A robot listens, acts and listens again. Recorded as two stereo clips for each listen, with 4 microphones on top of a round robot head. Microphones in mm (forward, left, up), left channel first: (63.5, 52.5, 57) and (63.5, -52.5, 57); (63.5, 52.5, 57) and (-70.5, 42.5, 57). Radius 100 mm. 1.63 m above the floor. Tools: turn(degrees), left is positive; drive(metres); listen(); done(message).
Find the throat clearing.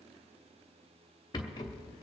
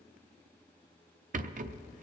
listen()
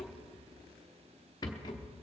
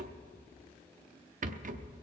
listen()
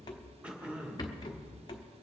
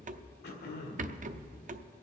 turn(degrees=-10)
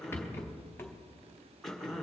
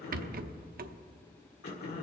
done("Found it: throat clearing, straight ahead, 2 to 4 m away.")